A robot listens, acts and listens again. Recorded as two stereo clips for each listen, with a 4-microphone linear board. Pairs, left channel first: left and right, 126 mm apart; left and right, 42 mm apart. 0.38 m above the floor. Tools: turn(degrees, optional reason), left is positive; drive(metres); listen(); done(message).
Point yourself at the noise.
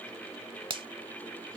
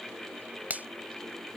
turn(degrees=-50, reason="The finger snap: about 50° right or 130° right.")
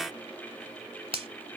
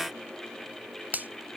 turn(degrees=-75, reason="So it is at 75° right.")
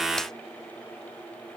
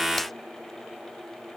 listen()
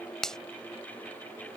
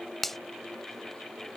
done("Found it: a finger snap, straight ahead.")